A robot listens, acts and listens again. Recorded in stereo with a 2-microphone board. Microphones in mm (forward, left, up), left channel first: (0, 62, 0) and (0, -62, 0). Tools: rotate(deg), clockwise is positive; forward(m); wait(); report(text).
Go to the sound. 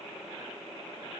wait()
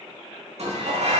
rotate(70)
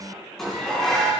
forward(1.0)
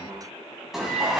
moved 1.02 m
forward(1.0)
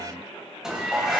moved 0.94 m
forward(1.0)
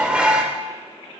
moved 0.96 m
rotate(10)
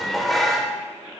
forward(1.0)
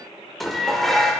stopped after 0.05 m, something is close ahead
report("I am next to the dishes clattering.")